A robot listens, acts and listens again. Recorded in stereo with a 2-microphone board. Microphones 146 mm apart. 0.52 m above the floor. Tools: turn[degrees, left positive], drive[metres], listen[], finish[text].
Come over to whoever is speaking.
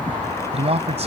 Thought: The man speaking: about 45° right or 135° right.
Action: turn[-45]
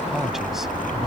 Action: listen[]
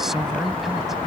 Action: listen[]
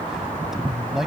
Action: drive[1.0]
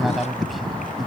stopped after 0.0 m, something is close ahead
Action: finish[Blocked. The man speaking is further on, straight ahead.]